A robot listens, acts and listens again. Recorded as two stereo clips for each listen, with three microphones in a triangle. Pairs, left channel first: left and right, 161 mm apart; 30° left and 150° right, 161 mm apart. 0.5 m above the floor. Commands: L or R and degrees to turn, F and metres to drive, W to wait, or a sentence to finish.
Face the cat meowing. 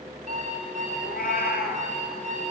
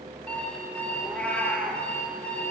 L110
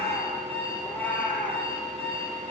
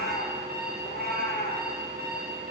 L10
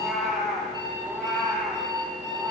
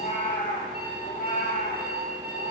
Found it: a cat meowing, straight ahead, over 4 m away.